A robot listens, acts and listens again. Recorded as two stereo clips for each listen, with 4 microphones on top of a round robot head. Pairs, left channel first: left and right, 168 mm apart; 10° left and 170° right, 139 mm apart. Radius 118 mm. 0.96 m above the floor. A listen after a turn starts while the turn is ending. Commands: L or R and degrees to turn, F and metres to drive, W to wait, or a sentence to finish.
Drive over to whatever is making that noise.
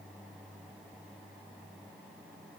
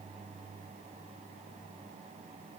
W
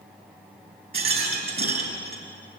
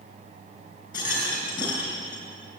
R60
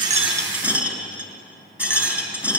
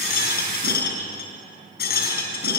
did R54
R10
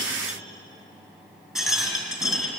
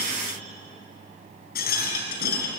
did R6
F1.0
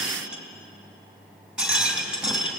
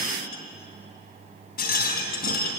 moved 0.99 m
F1.0
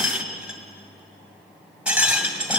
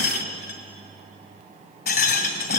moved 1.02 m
F1.0
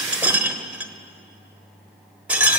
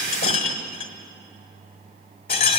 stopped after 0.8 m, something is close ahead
R10
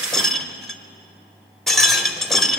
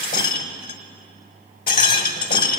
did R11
Arrived at the rattle, straight ahead.